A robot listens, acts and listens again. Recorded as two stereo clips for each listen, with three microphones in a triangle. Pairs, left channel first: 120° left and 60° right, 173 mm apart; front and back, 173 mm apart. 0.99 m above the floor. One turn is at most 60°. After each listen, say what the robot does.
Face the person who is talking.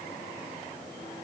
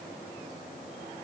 Keep listening.
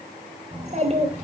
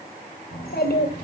Turn 15° right.
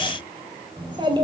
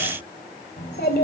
Found it: a child speaking, straight ahead.